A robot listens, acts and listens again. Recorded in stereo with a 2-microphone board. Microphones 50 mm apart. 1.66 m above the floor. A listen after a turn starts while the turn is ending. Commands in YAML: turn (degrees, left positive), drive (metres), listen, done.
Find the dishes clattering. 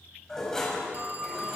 turn: 30
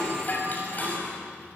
turn: 140
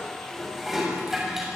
done: "Facing the dishes clattering, over 4 m away."